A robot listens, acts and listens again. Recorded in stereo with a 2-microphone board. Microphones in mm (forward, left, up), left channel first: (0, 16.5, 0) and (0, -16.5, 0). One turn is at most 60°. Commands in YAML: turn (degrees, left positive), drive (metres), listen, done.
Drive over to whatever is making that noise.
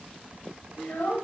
turn: 60
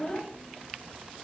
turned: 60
turn: 20
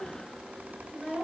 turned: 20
drive: 1.0
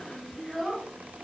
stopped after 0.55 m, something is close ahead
done: "Something is in my way. I am facing the child speaking but have not reached it."